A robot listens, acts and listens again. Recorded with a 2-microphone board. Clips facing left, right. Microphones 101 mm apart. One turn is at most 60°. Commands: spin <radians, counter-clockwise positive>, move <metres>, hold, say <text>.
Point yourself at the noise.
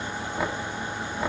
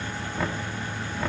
spin 0.52
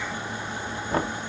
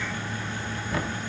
spin 1.05
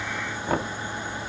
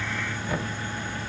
spin 0.96
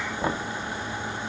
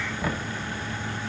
spin 0.52
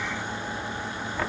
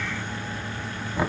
spin -0.26
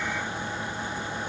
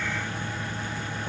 hold
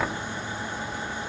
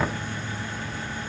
say Found it: knocking, straight ahead, 1 to 2 m away.